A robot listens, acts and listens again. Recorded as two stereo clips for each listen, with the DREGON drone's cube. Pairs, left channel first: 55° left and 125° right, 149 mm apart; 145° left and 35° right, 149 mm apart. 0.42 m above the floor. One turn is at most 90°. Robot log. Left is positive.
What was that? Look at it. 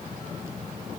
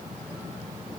cmd idle
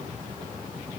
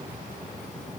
cmd idle
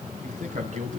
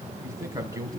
note: The man speaking: 100° right.
cmd yaw -90
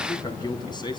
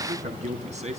end: Facing the man speaking.